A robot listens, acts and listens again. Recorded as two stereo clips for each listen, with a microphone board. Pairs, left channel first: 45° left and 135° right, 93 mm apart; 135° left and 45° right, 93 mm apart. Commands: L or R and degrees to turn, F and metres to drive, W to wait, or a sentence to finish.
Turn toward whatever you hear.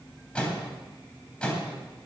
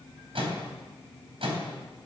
R35
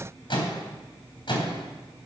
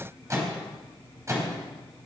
L15
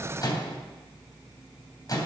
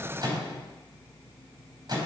Facing the microwave, 2 to 4 m away.